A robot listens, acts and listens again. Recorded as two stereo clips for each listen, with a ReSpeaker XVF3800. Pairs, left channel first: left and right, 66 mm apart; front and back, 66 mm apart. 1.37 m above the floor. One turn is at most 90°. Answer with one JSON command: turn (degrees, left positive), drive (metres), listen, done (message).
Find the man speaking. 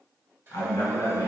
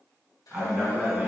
{"turn": 90}
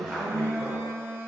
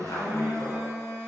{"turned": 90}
{"done": "Found it: a man speaking, straight ahead, 1 to 2 m away."}